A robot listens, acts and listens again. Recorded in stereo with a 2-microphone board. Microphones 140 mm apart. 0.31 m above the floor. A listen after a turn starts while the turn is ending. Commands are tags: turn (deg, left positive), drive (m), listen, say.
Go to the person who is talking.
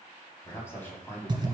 <turn deg="15"/>
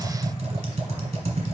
<listen/>
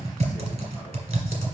<listen/>
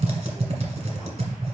<say>I heard a man speaking, but can't make it out now. It was about straight ahead or 150° left. I did not reach it.</say>